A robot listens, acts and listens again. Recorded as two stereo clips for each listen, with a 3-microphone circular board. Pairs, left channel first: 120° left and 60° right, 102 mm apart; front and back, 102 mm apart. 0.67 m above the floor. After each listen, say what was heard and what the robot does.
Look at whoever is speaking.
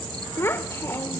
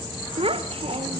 The child speaking: 175° right. Turn 175° right.
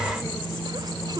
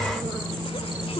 The child speaking is now 15° right. Turn 15° right.
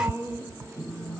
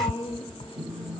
Facing the child speaking, 1 to 2 m away.